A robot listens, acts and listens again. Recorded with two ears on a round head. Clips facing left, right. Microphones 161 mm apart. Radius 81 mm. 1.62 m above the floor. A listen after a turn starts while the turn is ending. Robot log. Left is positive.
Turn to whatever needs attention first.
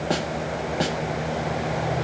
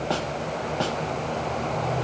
cmd idle
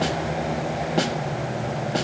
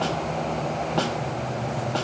cmd idle
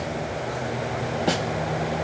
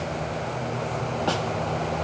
end: I can't make out anything urgent to turn to.